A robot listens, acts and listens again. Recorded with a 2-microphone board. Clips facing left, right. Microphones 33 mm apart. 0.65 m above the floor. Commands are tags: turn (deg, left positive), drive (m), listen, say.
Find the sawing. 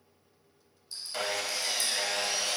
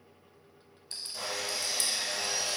<turn deg="65"/>
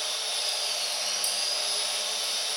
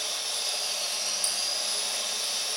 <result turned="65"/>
<turn deg="35"/>
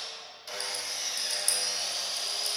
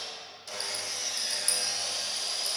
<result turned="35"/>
<turn deg="10"/>
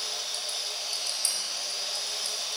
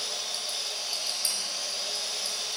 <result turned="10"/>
<say>Facing the sawing, under 1 m away.</say>